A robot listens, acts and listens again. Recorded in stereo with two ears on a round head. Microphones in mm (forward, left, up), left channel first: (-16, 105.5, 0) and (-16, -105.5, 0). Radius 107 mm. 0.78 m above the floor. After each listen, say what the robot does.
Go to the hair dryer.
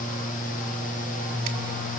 Keep listening.
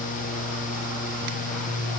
Keep listening.
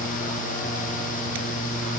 I can't make out a hair dryer to turn to.